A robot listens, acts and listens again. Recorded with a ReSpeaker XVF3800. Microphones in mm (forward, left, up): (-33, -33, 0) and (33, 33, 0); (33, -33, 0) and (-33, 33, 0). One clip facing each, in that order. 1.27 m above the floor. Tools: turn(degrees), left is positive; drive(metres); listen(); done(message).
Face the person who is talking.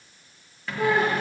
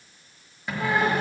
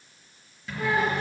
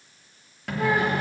turn(degrees=-140)
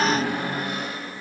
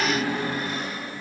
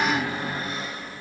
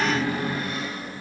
done("Facing the child speaking.")